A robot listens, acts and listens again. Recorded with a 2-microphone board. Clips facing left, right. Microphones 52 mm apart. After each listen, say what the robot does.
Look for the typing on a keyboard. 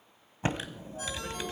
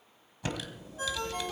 Turn 35° left.
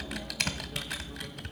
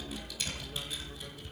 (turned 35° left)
Turn 110° left.
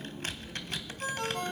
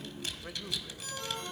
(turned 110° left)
Turn 40° left.
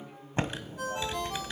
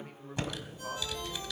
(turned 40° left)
Turn 30° left.
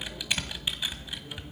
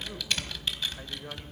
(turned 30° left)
Turn 10° left.
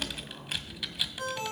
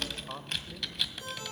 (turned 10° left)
Found it: typing on a keyboard, straight ahead, 1 to 2 m away.